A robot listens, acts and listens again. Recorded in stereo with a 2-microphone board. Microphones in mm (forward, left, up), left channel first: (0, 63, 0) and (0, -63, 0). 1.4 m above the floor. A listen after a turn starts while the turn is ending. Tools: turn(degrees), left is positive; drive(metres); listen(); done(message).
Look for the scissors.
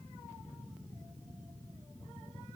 listen()
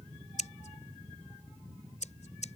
turn(degrees=70)
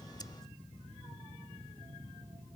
listen()
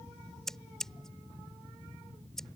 done("Found it: scissors, straight ahead.")